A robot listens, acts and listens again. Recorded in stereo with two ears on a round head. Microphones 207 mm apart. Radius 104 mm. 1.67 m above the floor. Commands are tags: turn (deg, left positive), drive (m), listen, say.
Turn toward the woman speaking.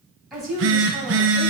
<turn deg="30"/>
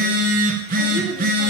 <listen/>
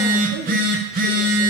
<listen/>
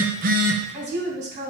<turn deg="-30"/>
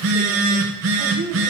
<listen/>
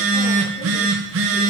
<listen/>
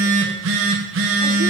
<say>I heard a woman speaking from this way, but can't make it out now.</say>